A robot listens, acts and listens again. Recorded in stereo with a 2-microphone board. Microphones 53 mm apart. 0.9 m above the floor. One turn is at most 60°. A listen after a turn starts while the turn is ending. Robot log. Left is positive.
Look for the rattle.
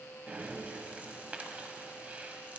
cmd idle
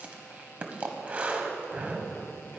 cmd idle
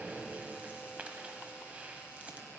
end: I can't make out a rattle to turn to.